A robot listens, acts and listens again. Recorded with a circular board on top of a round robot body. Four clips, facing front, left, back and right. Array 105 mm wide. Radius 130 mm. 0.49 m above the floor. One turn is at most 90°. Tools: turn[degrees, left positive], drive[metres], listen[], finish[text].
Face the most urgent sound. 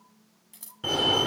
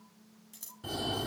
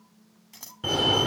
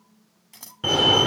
Thought: The fire alarm: 90° right.
Action: turn[-90]
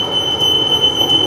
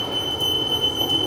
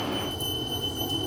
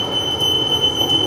Thought: The fire alarm is now 20° right.
Action: turn[-20]
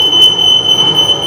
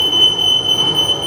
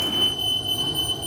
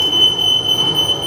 Action: finish[Found it: a fire alarm, straight ahead.]